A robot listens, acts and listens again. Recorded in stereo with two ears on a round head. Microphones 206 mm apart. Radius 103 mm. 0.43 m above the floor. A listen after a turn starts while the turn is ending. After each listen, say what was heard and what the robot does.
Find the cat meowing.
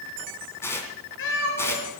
The cat meowing: about 55° left or 125° left. Turn 55° left.
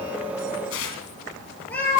So it is at 10° left. Turn 10° left.
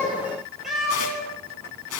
Facing the cat meowing.